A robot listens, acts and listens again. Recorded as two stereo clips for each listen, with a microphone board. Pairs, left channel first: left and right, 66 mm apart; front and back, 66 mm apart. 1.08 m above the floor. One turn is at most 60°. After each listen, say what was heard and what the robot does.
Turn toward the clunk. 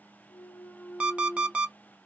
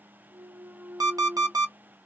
The clunk: 140° left. Turn 60° left.
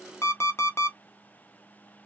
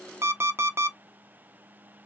Nothing new. It was at 80° left. Turn 60° left.
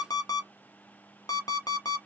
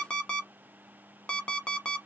Nothing new. It was at 20° left. Turn 20° left.
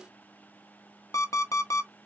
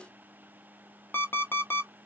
I heard a clunk from this way, but can't make it out now.